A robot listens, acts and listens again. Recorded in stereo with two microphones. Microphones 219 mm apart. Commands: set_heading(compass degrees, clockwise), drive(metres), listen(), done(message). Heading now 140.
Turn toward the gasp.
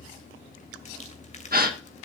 set_heading(185)
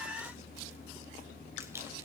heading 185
listen()
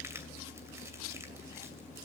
done("I heard a gasp, but can't make it out now. It was about straight ahead or 90° right.")